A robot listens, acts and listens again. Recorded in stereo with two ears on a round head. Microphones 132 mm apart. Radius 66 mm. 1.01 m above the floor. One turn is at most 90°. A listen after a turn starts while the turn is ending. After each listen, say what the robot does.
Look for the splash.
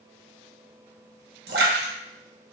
Turn 90° right.
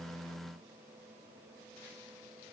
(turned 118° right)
Turn 30° left.
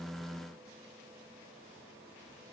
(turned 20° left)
Turn 10° left.
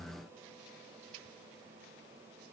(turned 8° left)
Facing where the splash came from. I can't hear it now.